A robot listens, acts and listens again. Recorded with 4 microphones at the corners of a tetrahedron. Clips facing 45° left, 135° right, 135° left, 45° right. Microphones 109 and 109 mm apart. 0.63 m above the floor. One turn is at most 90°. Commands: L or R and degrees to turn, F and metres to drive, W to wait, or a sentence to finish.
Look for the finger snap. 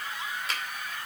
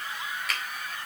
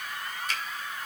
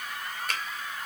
R15
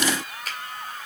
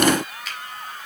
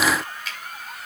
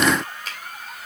Facing the finger snap.